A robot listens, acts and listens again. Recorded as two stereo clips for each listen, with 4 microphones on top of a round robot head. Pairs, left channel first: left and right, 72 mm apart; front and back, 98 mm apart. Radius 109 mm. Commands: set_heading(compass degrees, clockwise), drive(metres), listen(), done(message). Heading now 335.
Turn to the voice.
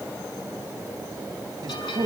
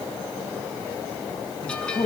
set_heading(15)
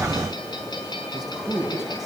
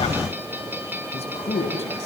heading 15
done("Found it: a man speaking, straight ahead.")